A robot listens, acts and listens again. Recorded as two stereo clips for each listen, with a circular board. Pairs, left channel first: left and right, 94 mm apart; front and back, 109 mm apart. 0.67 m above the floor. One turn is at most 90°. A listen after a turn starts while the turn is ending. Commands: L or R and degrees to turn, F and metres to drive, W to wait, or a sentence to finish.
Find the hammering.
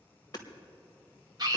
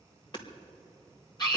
L45
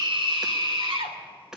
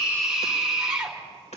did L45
Found it: hammering, straight ahead, 1 to 2 m away.